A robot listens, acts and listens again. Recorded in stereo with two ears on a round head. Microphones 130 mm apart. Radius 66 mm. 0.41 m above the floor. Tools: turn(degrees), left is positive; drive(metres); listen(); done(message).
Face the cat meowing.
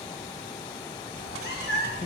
turn(degrees=90)
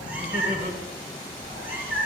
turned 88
turn(degrees=-15)
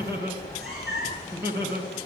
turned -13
done("Found it: a cat meowing, straight ahead.")